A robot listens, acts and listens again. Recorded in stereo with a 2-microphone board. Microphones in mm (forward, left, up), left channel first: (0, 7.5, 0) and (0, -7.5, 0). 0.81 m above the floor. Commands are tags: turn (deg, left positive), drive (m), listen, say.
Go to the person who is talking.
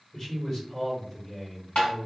<turn deg="30"/>
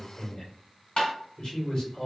<turn deg="125"/>
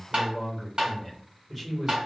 <drive m="1.0"/>
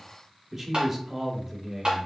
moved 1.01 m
<turn deg="-20"/>
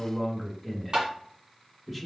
<drive m="1.0"/>
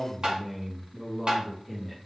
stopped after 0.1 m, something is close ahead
<say>I am next to the man speaking.</say>